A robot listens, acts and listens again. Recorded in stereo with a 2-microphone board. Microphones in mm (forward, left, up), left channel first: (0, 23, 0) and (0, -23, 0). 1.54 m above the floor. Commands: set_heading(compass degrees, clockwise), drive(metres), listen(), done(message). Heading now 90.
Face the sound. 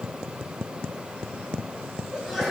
set_heading(120)
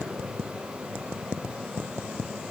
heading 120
listen()
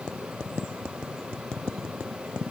done("I heard a sneeze, but can't make it out now. It was about 25° left or 145° right.")